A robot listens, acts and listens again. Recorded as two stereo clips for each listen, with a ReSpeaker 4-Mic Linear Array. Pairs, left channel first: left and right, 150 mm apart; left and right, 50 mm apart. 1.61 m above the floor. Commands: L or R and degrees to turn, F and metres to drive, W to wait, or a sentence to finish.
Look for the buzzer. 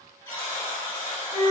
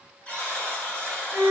L25
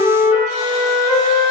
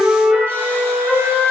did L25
W
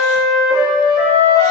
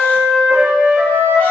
W
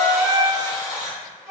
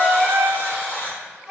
L130
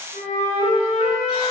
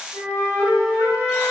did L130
W
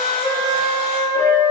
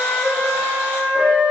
W
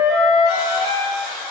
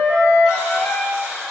Found it: a buzzer, straight ahead, 1 to 2 m away.